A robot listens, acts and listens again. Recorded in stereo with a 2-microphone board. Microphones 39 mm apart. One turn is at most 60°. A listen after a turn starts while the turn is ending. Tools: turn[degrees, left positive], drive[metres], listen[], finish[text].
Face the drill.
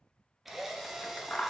Action: turn[-30]
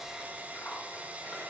Thought: So it is at 145° right.
Action: turn[-60]
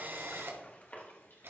Thought: The drill is now 75° right.
Action: turn[-60]
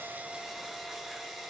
Action: finish[Found it: a drill, straight ahead, 1 to 2 m away.]